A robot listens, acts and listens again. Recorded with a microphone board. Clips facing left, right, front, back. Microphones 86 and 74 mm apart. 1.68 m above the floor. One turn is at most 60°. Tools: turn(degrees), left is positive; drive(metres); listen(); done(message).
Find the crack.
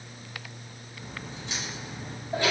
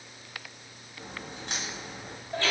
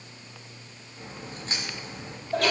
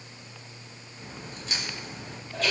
turn(degrees=-55)
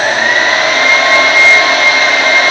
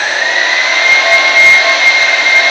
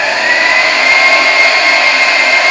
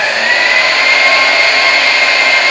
done("I heard a crack from this way, but can't make it out now.")